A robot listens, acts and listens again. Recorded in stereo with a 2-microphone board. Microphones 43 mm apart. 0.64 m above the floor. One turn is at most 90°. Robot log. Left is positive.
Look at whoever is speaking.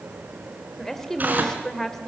cmd yaw +30
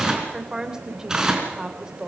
note: So it is at 20° right.
cmd yaw -20
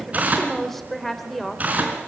end: Facing the woman speaking, 2 to 4 m away.